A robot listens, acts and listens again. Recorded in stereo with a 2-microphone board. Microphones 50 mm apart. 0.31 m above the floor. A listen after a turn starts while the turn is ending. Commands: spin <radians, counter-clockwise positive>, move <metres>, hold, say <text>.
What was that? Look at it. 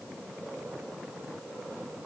hold
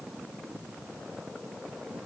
hold
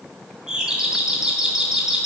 spin -0.52
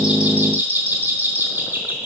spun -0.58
spin -2.27
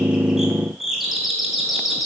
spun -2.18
say Facing the doorbell.